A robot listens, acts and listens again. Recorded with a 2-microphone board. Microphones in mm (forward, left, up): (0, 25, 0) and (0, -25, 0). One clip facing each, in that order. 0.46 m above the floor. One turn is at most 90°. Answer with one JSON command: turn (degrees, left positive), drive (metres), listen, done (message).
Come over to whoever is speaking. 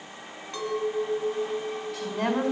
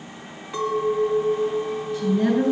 {"turn": 65}
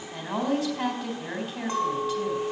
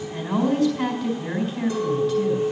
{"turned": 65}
{"turn": 10}
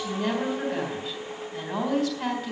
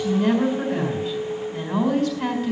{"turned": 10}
{"drive": 1.0}
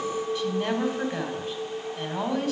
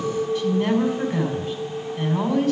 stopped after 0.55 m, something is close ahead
{"turn": 10}
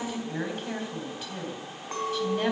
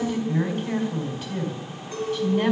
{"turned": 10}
{"done": "Blocked. The woman speaking is further on, straight ahead."}